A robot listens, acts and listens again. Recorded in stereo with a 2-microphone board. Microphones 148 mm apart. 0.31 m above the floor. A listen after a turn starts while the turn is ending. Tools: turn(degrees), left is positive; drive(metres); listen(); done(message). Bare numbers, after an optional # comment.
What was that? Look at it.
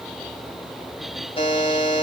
# The buzzer: about 40° left or 140° left.
turn(40)
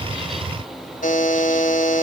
# So it is at 95° left.
turn(95)
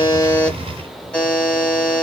# The buzzer is now 10° left.
turn(10)
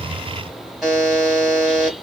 done("Found it: a buzzer, straight ahead, 1 to 2 m away.")